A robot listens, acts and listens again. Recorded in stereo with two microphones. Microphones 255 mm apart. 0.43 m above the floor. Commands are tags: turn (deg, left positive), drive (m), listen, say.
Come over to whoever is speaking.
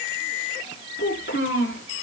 <turn deg="50"/>
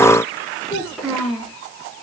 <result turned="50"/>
<drive m="1.0"/>
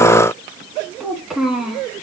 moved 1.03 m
<drive m="1.0"/>
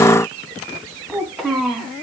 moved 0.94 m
<drive m="1.0"/>
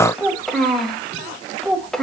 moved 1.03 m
<drive m="1.0"/>
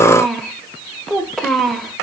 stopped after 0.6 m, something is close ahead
<say>I am next to the child speaking.</say>